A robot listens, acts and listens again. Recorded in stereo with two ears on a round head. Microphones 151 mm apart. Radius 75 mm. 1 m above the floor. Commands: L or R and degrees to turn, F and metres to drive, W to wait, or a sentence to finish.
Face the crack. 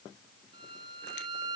W
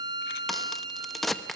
L30
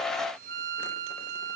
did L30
W
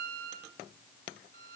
I heard a crack, but can't make it out now. It was about 30° right or 150° left.